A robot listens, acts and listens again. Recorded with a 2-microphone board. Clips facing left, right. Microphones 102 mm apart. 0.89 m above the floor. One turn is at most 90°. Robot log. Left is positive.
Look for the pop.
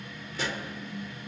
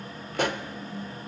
note: The pop: about 55° right or 125° right.
cmd yaw -55
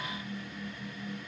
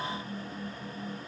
cmd idle
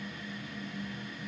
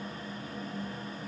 end: I heard a pop, but can't make it out now. It was about straight ahead or 70° right.